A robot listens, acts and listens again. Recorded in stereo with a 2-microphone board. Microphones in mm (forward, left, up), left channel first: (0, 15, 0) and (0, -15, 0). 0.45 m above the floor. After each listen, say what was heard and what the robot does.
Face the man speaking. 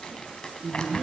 The man speaking: about 65° right or 115° right. Turn 65° right.
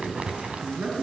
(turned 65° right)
So it is at 50° right. Turn 50° right.
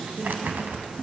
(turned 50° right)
Facing the man speaking.